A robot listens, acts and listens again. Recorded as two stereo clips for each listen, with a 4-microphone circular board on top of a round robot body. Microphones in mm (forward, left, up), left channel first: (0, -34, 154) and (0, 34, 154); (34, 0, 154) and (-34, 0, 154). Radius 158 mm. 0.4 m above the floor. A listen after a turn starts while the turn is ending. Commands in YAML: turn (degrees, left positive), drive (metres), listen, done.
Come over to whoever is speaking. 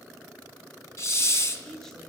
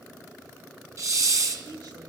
turn: -170
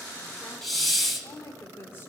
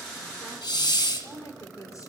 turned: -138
turn: -35
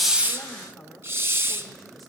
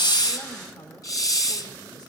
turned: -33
drive: 1.0
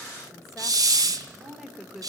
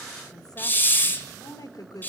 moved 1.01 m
drive: 1.0
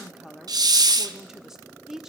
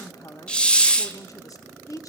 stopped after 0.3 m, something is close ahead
turn: 10
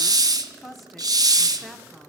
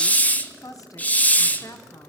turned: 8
done: "I am next to the woman speaking."